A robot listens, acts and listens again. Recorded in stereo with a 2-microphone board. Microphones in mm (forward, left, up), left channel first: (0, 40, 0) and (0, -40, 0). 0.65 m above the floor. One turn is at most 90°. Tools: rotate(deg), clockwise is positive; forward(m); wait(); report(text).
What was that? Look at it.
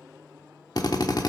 rotate(-55)
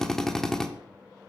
report("Facing the drill, 1 to 2 m away.")